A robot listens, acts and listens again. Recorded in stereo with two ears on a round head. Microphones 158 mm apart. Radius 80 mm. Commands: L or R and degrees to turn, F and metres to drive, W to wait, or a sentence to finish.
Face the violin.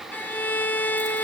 L30
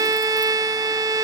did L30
R20
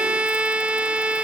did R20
Facing the violin.